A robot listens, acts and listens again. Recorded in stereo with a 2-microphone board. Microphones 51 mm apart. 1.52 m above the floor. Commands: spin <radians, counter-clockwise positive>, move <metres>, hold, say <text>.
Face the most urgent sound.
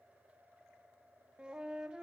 hold
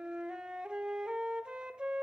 hold
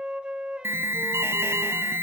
spin -0.87
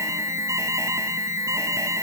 spin -1.31
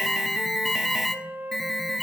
say Facing the alarm, under 1 m away.